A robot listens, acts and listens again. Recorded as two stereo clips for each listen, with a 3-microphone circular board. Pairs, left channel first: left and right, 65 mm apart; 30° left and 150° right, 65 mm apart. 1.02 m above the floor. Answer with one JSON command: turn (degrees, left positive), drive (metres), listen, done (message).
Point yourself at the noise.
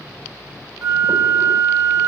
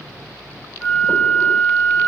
{"turn": -45}
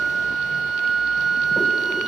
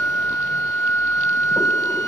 {"turn": 10}
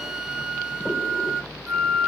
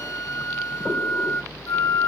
{"done": "Found it: a flute, straight ahead, 1 to 2 m away."}